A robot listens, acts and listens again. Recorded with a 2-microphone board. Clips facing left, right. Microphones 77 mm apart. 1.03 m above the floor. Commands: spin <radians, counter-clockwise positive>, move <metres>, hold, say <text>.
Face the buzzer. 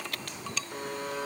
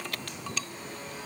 spin 1.13
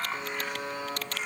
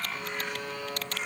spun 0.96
spin 0.44
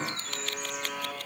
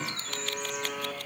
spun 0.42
say Facing the buzzer.